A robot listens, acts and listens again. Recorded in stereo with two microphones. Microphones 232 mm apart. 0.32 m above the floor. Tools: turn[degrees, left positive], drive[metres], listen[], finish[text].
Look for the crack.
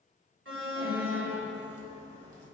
Thought: The crack: about 30° right or 150° right.
Action: turn[-30]
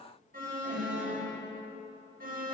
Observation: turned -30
Action: listen[]
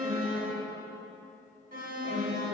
Action: finish[I heard a crack, but can't make it out now. It was about straight ahead or 120° right.]